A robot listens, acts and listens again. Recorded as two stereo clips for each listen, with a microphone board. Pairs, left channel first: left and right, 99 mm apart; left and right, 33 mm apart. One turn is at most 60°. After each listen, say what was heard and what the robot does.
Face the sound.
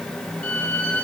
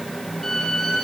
Turn 30° left.
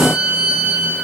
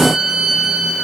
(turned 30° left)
So it is at 15° right. Turn 15° right.
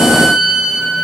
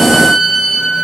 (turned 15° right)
Found it: a violin, straight ahead, over 4 m away.